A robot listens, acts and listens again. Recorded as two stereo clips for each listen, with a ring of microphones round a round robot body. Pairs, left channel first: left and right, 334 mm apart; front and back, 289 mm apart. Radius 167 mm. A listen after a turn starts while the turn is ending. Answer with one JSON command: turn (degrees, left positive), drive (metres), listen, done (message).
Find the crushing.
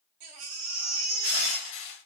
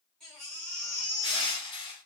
{"turn": 75}
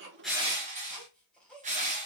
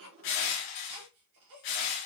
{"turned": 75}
{"turn": -20}
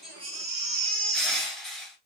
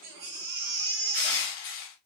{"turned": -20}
{"done": "Facing the crushing, 1 to 2 m away."}